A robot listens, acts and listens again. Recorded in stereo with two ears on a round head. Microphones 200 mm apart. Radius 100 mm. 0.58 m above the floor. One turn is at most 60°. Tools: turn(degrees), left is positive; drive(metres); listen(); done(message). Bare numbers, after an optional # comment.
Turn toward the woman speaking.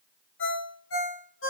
listen()
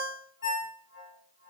listen()
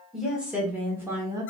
# The woman speaking: about 15° right or 165° right.
turn(-15)
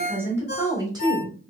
# The woman speaking: about 25° right or 155° right.
turn(-25)
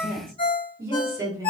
turn(-30)
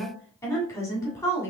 # So it is at 15° left.
turn(15)
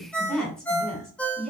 done("Found it: a woman speaking, straight ahead.")